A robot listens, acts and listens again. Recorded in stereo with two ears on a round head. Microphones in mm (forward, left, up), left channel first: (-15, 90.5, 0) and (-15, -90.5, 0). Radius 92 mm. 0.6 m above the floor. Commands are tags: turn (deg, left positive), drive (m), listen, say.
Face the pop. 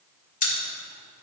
<turn deg="40"/>
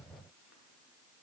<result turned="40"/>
<listen/>
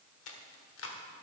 <say>I heard a pop, but can't make it out now. It was about straight ahead or 100° left.</say>